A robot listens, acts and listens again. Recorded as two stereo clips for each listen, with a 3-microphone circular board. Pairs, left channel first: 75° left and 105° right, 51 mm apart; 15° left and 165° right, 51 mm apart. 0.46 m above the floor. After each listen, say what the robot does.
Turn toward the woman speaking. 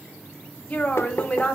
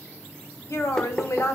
Turn 10° left.
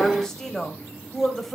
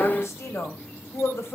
Turn 10° right.
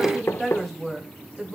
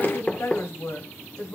Turn 15° right.
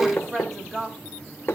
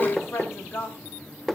Turn 15° right.
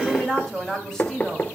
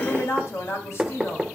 Found it: a woman speaking, straight ahead, 2 to 4 m away.